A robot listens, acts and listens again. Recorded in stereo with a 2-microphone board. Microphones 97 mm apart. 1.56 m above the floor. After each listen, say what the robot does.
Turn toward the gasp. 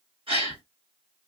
Turn 60° right.
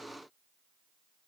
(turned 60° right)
Keep listening.
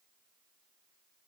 I heard a gasp, but can't make it out now. It was about straight ahead or 60° right.